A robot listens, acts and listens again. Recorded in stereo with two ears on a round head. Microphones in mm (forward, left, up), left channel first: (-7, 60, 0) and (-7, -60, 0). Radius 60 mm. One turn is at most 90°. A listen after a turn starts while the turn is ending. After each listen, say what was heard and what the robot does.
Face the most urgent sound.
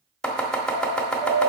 The alarm: about 15° right or 165° right. Turn 15° right.
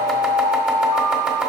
Found it: an alarm, straight ahead, 2 to 4 m away.